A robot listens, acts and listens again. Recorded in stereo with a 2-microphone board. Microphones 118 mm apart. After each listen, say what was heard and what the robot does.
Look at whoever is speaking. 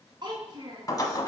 The child speaking: about 40° right or 140° right. Turn 40° right.
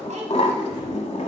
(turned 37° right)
Keep listening.
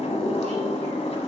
Keep listening.
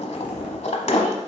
I heard a child speaking, but can't make it out now. It was about 5° right or 100° right.